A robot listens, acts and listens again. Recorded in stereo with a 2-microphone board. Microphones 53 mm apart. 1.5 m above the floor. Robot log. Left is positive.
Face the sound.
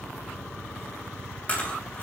note: The chewing: about 30° left or 150° left.
cmd yaw +30
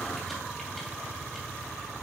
cmd idle
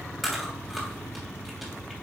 end: Found it: chewing, straight ahead.